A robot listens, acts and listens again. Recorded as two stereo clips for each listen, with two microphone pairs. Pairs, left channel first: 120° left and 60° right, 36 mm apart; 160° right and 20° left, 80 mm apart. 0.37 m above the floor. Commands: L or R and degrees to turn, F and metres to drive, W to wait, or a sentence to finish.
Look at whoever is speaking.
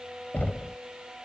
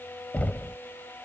W
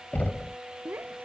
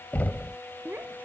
R45
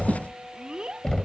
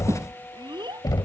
Facing the child speaking.